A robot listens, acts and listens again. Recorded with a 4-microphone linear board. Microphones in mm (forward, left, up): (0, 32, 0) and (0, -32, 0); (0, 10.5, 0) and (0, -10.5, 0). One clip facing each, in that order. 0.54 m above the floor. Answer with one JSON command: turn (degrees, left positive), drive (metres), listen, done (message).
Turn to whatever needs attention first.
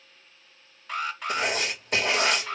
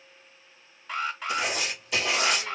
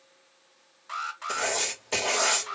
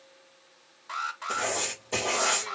{"turn": 30}
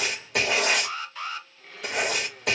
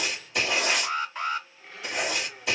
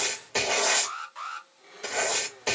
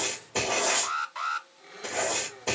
{"turn": -30}
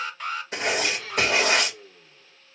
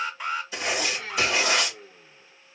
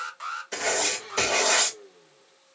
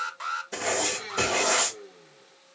{"turn": -10}
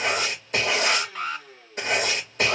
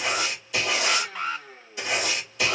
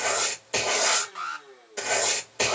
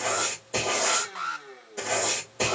{"done": "Facing the alarm."}